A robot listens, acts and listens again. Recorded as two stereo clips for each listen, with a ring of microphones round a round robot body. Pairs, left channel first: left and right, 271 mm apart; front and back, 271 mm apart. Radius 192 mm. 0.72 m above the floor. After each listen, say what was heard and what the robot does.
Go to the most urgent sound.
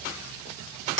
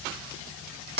Keep listening.
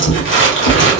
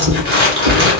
Keep listening.
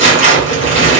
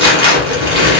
I can't make out anything urgent to turn to.